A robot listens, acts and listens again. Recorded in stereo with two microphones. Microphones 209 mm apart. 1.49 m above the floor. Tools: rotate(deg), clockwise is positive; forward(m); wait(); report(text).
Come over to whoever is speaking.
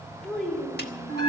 rotate(-30)
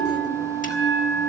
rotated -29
wait()
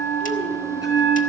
wait()
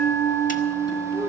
rotate(30)
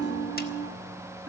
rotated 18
rotate(10)
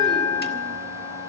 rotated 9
wait()
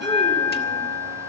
report("Facing where the child speaking came from. I can't hear it now. I did not reach it.")